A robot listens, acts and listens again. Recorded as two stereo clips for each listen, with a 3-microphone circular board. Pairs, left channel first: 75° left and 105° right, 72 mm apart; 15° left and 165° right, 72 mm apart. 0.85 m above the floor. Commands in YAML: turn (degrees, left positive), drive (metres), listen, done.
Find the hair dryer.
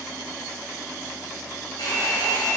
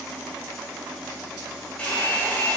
turn: 85
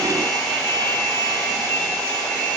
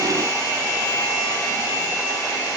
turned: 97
turn: -10
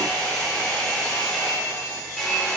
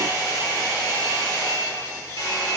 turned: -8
done: "Facing the hair dryer."